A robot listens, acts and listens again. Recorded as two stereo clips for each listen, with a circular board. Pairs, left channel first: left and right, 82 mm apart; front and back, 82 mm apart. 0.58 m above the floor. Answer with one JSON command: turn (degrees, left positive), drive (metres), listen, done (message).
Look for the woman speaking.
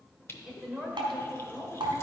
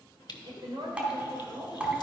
{"turn": 180}
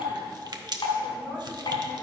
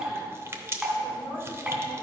{"listen": true}
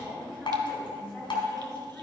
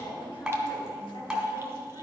{"turn": 15}
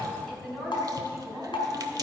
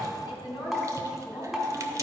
{"done": "Found it: a woman speaking, straight ahead, over 4 m away."}